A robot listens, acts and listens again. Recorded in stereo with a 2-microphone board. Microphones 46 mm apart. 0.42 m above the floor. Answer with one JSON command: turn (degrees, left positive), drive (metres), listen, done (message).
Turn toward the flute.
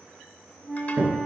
{"turn": -20}
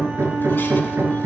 {"listen": true}
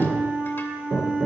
{"turn": -140}
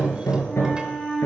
{"done": "Facing the flute."}